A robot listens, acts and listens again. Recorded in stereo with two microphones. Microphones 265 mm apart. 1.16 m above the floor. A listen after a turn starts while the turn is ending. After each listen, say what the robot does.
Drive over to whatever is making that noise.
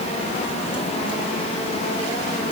Keep listening.
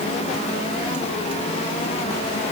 Keep listening.
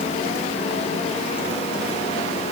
I can't make out anything.